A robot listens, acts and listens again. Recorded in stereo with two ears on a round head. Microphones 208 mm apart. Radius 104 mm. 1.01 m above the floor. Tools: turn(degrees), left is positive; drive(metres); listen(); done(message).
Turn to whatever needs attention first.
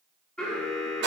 turn(degrees=30)
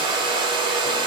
listen()
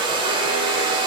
listen()
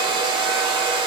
done("I heard an alarm, but can't make it out now. It was about 25° right or 145° left.")